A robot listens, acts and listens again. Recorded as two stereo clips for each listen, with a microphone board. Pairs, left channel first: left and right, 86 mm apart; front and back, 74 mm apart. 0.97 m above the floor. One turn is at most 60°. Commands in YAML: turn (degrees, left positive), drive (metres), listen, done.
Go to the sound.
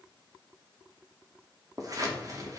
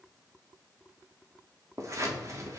turn: -60
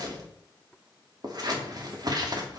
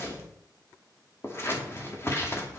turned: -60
turn: -55
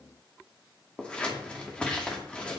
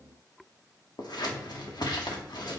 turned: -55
turn: 15
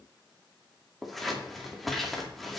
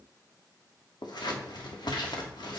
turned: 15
drive: 1.0
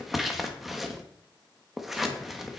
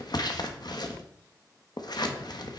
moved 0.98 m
drive: 1.0
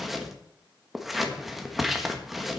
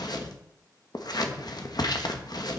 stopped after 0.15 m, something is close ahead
done: "Arrived at the scissors, straight ahead."